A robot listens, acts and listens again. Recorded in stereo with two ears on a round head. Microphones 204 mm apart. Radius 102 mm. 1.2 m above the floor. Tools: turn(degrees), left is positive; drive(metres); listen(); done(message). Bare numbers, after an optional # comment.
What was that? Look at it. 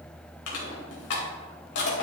# The crushing: about 70° left or 110° left.
turn(70)
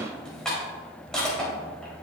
done("Facing the crushing.")